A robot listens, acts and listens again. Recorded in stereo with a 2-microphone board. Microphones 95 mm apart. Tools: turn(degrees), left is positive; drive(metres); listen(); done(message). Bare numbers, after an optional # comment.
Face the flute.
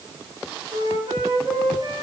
# The flute: about 70° right or 110° right.
turn(-70)
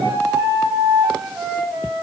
# So it is at 30° right.
turn(-30)
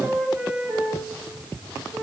# The flute is now 20° right.
turn(-20)
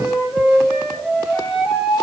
done("Found it: a flute, straight ahead.")